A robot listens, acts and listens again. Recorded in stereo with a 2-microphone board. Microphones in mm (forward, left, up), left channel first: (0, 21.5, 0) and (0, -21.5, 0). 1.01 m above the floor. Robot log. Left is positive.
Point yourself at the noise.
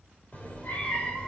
note: The cat meowing: about 25° left or 155° left.
cmd yaw +25
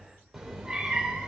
note: So it is at 20° right.
cmd yaw -20
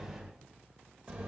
note: The cat meowing is now 20° right.
cmd yaw -20
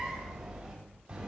note: The cat meowing is now 20° right.
cmd yaw -20
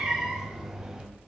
note: The cat meowing is now 10° right.
cmd yaw -10
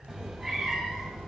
end: Found it: a cat meowing, straight ahead, 2 to 4 m away.